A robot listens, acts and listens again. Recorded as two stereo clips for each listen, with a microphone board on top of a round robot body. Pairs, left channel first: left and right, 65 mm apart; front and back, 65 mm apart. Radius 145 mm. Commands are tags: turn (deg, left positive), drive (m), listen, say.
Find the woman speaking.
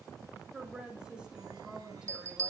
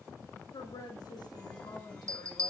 <turn deg="-10"/>
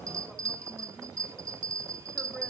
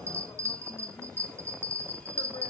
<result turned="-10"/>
<listen/>
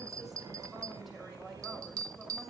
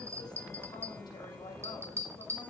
<listen/>
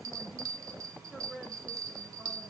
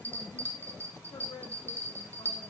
<say>Found it: a woman speaking, straight ahead.</say>